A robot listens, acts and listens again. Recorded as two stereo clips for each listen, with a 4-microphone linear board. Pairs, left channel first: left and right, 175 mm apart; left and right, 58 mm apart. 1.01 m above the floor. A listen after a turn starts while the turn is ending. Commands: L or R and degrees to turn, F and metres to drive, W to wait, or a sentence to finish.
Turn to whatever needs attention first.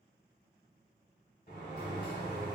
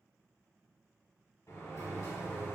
W
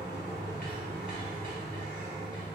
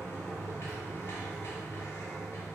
W
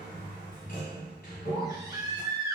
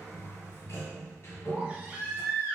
R20
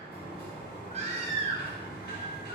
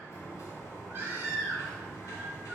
R135
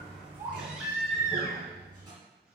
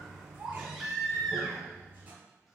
Facing the baby crying.